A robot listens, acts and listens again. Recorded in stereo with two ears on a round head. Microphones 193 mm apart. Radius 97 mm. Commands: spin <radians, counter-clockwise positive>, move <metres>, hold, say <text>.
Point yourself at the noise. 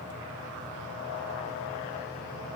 hold
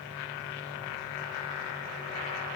hold
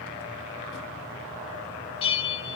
spin 0.44
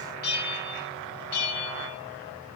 spin 2.27
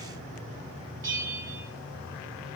spin -0.26
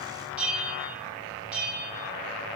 say Facing the bell, 2 to 4 m away.